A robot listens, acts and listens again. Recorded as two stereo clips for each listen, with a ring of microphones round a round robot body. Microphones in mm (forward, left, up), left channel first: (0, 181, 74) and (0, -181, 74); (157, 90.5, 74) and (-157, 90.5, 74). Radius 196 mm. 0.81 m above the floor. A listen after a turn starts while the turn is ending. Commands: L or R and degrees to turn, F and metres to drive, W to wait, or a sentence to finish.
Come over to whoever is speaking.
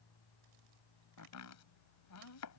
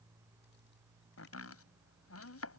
W
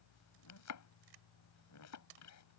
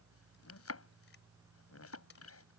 W
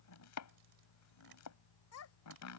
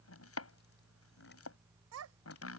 L140
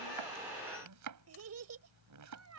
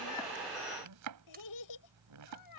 R40
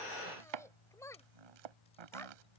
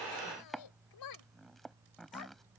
F1.0
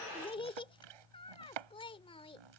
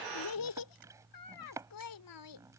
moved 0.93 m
L15
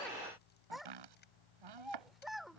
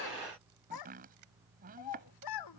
F1.0
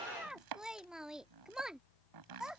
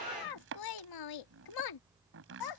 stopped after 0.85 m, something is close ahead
Arrived at the child speaking, straight ahead.